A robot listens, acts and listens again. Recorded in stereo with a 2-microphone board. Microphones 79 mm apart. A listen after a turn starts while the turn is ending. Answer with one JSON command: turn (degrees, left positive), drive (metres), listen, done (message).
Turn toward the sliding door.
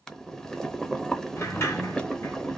{"turn": 35}
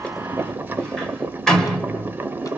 {"turn": 10}
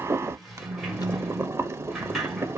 {"done": "Facing the sliding door."}